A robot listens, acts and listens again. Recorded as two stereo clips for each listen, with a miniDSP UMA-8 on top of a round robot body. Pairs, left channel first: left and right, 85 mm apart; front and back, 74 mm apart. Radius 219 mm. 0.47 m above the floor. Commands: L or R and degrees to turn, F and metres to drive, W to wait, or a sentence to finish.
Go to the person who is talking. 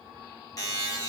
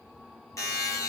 W
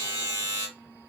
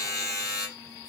W
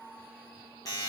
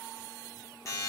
I can't make out anyone speaking to turn to.